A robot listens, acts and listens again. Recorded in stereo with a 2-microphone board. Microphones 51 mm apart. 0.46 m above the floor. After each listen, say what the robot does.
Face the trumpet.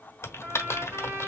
Turn 65° right.
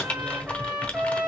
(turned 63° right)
Turn 30° right.
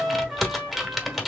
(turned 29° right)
Facing the trumpet.